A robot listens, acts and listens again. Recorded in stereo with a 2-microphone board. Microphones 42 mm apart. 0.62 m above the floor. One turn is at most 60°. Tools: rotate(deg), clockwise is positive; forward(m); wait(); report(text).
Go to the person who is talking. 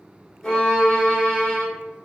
wait()
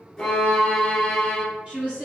rotate(30)
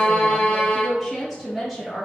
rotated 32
forward(1.0)
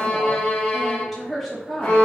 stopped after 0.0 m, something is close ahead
report("Blocked. The woman speaking is further on, straight ahead.")